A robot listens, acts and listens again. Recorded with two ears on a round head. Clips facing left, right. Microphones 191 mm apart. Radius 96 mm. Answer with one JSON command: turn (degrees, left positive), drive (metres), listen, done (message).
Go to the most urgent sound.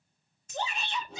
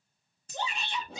{"turn": -90}
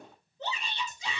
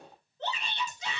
{"turn": 10}
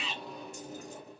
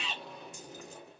{"drive": 1.0}
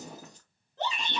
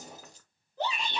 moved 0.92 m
{"drive": 1.0}
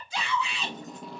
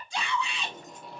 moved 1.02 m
{"drive": 1.0}
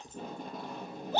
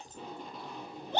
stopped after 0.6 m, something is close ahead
{"done": "I am next to the shout."}